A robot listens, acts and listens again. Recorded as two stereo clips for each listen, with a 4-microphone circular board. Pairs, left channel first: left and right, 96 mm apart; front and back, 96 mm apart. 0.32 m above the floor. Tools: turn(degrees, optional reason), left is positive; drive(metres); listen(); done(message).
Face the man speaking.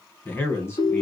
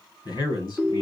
turn(degrees=35, reason="The man speaking: 35° left.")
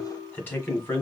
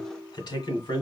turn(degrees=30, reason="The man speaking is now 30° left.")
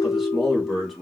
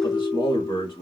done("Found it: a man speaking, straight ahead.")